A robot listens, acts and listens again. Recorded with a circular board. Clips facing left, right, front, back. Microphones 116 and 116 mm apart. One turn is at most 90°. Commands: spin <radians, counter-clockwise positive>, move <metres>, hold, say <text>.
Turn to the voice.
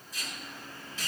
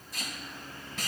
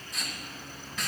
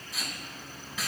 hold
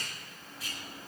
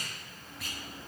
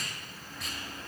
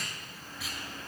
hold
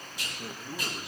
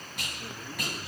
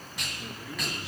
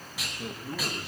spin 1.57
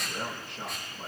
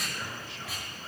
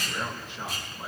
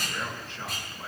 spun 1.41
spin 1.31
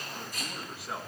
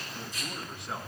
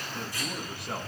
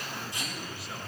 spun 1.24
say Found it: a man speaking, straight ahead, over 4 m away.